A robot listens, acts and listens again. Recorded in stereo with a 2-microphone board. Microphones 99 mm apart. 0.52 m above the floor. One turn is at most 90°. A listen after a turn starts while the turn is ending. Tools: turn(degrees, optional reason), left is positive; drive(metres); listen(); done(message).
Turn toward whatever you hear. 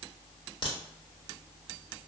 turn(degrees=55, reason="The crack: about 55° left or 125° left.")
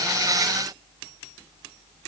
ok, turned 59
listen()
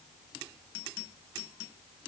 done("I heard a crack, but can't make it out now. It was about 5° right or 65° left.")